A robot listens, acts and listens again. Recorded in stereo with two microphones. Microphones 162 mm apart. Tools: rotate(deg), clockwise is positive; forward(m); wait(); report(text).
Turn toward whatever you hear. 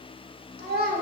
rotate(90)
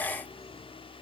wait()
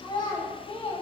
rotate(-35)
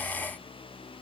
wait()
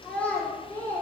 rotate(-15)
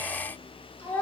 rotate(-15)
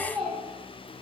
report("Found it: a child speaking, straight ahead, 2 to 4 m away.")